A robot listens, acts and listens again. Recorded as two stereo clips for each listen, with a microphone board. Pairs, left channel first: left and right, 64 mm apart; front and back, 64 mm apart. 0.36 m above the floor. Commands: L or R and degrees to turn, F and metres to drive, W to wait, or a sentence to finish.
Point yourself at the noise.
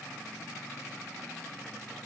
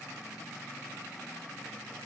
W
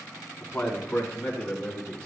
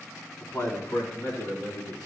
L15
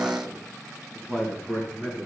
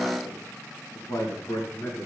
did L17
R20
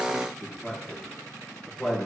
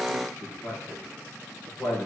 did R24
Facing the man speaking, over 4 m away.